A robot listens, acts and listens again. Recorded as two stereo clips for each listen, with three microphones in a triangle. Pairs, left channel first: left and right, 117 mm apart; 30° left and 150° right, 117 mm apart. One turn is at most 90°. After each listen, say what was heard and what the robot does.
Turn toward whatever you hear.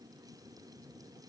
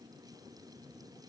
Keep listening.
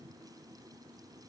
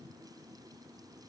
Keep listening.
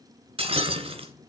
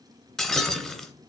The breaking glass: 55° right. Turn 55° right.
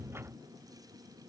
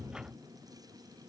Facing where the breaking glass came from. I can't hear it now.